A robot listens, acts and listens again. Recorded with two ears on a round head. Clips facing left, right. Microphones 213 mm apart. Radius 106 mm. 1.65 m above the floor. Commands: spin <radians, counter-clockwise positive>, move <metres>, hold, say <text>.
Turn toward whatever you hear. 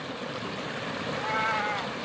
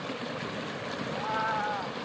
spin 0.61
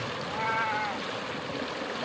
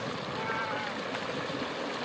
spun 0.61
spin 1.83
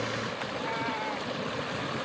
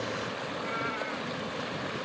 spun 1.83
spin -0.35
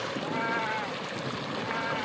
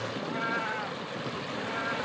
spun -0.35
say Facing the cat meowing.